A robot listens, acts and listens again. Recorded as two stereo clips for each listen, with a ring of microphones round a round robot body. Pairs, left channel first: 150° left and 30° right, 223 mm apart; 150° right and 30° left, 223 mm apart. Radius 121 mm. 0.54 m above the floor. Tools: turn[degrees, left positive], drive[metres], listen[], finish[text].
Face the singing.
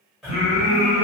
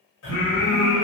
Thought: The singing: 115° right.
Action: turn[-115]
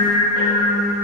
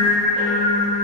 Thought: The singing is now 40° left.
Action: turn[40]
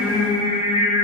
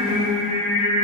Thought: The singing is now 45° left.
Action: turn[45]
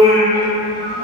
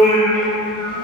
Thought: The singing is now 10° left.
Action: turn[10]
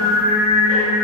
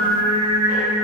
Action: finish[Facing the singing, 1 to 2 m away.]